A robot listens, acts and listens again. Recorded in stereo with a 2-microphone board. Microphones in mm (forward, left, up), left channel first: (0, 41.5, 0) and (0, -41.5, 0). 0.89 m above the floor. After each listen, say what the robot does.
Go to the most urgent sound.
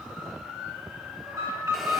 Turn 45° right.
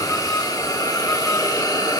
Keep listening.
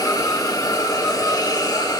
Keep listening.
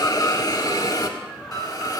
Drive 1.0 m forward.
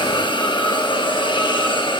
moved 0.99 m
Keep listening.
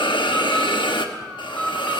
Drive 1.0 m forward.
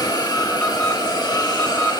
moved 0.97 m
Turn 15° left.
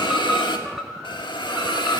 Drive 1.0 m forward.
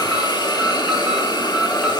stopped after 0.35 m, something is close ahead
Keep listening.
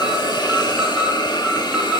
I am next to the alarm.